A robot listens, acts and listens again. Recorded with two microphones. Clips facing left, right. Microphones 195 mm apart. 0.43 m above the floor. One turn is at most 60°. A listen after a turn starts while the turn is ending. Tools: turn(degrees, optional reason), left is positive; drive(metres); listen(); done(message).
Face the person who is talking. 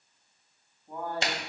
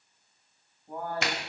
turn(degrees=-30)
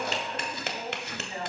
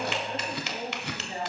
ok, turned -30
turn(degrees=-60, reason="So it is at 140° right.")
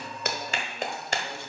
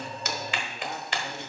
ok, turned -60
turn(degrees=-60, reason="Nothing new. It was at 80° right.")
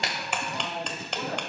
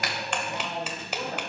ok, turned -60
turn(degrees=-10, reason="The man speaking is now 10° right.")
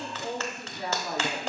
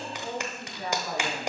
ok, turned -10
done("Found it: a man speaking, straight ahead, over 4 m away.")